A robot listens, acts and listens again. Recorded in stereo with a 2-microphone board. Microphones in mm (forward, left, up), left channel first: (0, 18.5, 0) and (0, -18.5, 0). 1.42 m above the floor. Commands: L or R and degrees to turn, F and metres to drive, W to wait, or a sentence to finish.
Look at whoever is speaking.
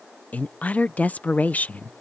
L40
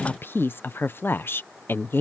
L95
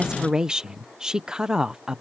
R20
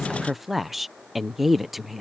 Found it: a woman speaking, straight ahead.